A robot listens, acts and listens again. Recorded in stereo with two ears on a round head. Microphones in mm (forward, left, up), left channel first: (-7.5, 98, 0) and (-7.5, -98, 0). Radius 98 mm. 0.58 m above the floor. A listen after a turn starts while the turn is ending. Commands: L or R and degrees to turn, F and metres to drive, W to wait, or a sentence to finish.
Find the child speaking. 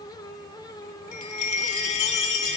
W
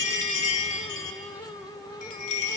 W
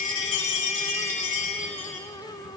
I can't make out a child speaking, only a chime.